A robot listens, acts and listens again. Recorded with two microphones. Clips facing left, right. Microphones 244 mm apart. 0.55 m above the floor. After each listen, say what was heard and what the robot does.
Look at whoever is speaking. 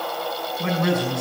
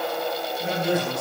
Turn 90° left.
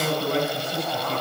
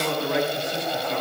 Found it: a man speaking, straight ahead, over 4 m away.